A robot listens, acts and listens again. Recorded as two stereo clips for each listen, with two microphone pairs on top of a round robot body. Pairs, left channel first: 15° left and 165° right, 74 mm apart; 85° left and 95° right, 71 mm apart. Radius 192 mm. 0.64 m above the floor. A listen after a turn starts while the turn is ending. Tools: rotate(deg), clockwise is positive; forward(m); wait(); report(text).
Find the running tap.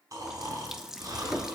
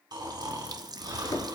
rotate(80)
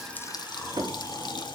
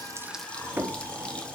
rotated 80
wait()
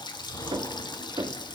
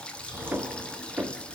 report("Facing the running tap.")